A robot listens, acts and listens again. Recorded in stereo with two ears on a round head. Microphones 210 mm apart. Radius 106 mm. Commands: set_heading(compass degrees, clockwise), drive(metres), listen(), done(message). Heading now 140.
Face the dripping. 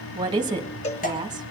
set_heading(100)
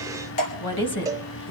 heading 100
set_heading(0)
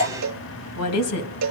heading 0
set_heading(340)
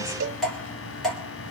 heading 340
done("Found it: dripping, straight ahead, 2 to 4 m away.")